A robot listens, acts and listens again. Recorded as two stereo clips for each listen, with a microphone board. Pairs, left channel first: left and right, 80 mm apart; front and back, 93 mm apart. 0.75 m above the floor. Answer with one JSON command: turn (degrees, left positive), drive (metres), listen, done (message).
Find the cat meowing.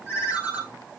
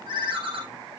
{"listen": true}
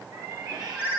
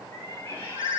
{"turn": -65}
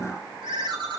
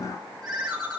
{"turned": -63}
{"listen": true}
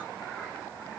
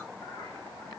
{"listen": true}
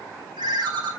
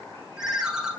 {"done": "Facing where the cat meowing came from. I can't hear it now."}